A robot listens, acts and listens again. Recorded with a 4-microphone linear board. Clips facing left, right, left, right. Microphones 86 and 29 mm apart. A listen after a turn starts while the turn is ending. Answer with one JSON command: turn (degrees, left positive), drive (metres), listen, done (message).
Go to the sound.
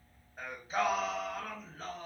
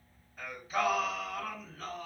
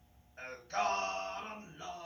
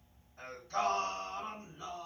{"turn": 35}
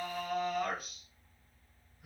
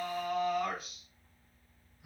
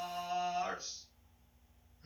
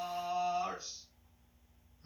{"turn": 110}
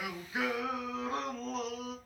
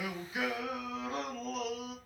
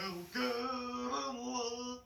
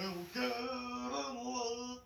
{"turn": 35}
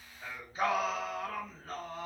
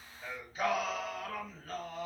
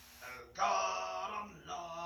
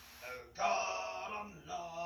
{"turn": 30}
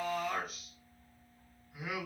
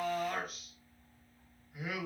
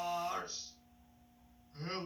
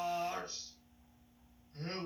{"drive": 1.0}
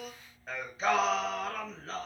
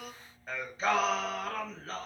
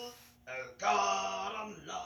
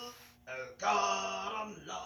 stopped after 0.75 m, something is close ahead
{"done": "I am next to the singing."}